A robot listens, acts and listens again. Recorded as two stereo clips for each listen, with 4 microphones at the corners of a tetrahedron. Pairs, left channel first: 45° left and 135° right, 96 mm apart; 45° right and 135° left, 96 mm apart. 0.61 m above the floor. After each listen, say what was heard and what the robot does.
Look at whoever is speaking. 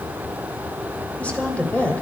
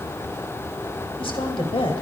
The woman speaking: 30° right. Turn 30° right.
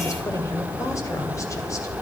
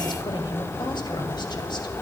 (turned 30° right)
The woman speaking is now 10° right. Turn 10° right.
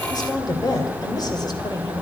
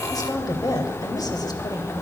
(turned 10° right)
Facing the woman speaking.